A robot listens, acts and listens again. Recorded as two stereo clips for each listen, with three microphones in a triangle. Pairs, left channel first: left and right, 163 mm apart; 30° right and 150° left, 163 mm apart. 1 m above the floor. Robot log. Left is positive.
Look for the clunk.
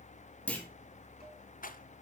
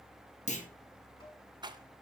note: The clunk: 10° left.
cmd yaw +10
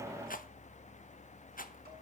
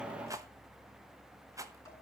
end: I heard a clunk from this way, but can't make it out now.